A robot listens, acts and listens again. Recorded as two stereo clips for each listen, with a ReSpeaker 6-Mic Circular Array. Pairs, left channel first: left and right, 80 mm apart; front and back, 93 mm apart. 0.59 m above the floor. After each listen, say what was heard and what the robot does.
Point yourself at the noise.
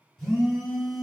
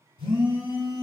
The phone buzzing: 170° left. Turn 170° left.
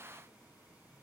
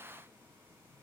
Keep listening.
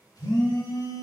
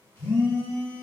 The phone buzzing is now 60° left. Turn 60° left.
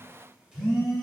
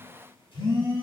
The phone buzzing is now 10° right. Turn 10° right.
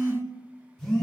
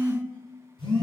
Facing the phone buzzing.